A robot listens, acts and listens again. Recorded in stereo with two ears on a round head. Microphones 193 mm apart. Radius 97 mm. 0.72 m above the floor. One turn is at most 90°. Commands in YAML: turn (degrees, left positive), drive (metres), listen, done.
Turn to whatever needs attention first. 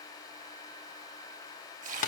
listen: true
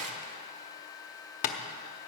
listen: true
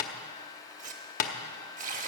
done: "I can't make out anything urgent to turn to."